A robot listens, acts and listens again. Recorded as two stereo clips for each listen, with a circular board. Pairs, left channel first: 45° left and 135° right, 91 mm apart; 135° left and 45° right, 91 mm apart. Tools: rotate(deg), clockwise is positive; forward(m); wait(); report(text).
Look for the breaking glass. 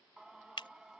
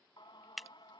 rotate(-45)
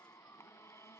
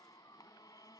report("I heard breaking glass from this way, but can't make it out now.")